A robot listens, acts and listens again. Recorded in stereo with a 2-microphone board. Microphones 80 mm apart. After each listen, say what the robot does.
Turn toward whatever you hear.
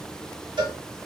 Turn 90° right.
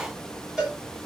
Turn 10° right.
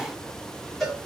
Facing the cowbell.